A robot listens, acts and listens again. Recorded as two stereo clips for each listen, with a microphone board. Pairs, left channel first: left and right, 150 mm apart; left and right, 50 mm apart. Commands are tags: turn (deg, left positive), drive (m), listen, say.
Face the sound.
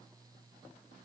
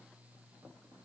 <listen/>
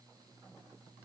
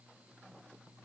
<listen/>
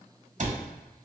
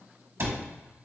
<turn deg="-55"/>
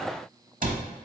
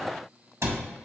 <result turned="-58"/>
<turn deg="-70"/>
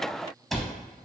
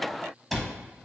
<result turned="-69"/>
<say>Facing the cupboard door, under 1 m away.</say>